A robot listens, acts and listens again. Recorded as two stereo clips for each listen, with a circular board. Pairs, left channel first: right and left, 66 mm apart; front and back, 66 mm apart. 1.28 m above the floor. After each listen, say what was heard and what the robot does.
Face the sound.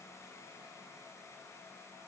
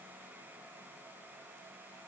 Keep listening.
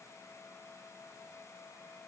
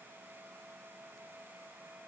Keep listening.
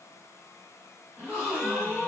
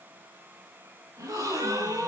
The gasp: 165° left. Turn 165° left.
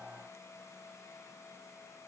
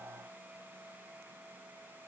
I heard a gasp from this way, but can't make it out now.